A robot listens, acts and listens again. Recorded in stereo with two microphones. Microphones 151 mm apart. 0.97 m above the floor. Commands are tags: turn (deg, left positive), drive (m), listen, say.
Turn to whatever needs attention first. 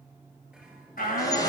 <turn deg="65"/>
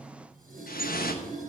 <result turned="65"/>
<listen/>
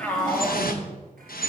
<turn deg="10"/>
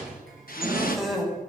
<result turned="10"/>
<say>Facing the shout.</say>